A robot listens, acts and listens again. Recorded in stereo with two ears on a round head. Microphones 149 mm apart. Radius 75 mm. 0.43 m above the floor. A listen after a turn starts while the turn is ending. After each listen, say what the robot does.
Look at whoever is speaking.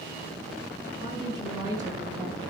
Turn 25° right.
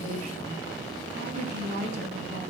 Turn 135° right.
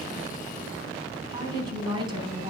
Turn 25° right.
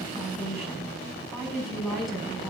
Found it: a woman speaking, straight ahead, over 4 m away.